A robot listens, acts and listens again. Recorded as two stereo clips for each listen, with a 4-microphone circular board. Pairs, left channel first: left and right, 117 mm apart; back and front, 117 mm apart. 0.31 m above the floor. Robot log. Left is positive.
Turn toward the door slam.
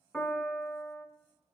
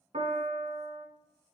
cmd idle
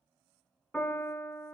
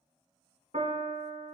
cmd idle
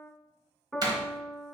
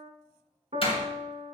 note: The door slam: 140° right.
cmd yaw -140
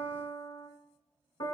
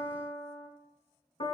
end: I heard a door slam from this way, but can't make it out now.